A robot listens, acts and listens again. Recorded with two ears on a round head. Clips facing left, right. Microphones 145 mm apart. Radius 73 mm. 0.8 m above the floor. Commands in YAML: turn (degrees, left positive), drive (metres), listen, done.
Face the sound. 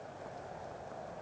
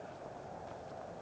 listen: true
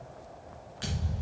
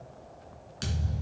turn: -55
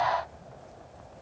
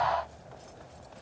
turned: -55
listen: true
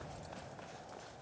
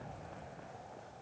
done: "I heard a thud, but can't make it out now. It was about straight ahead or 70° right."